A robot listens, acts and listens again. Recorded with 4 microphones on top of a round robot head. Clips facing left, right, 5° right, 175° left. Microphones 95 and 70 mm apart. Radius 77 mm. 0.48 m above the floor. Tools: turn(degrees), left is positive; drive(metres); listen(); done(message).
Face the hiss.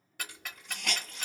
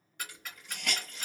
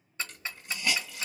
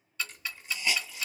turn(degrees=25)
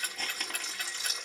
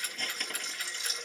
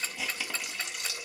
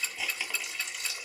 turn(degrees=10)
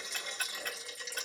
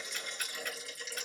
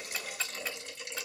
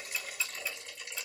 done("Found it: a hiss, straight ahead.")